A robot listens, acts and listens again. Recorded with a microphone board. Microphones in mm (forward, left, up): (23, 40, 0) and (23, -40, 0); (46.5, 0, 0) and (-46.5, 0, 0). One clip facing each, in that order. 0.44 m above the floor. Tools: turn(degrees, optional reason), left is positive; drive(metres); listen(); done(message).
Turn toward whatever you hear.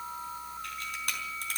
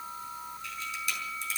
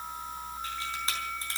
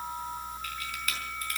turn(degrees=60, reason="The camera shutter: 60° left.")
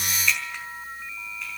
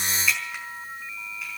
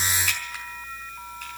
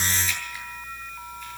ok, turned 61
done("Found it: a camera shutter, straight ahead.")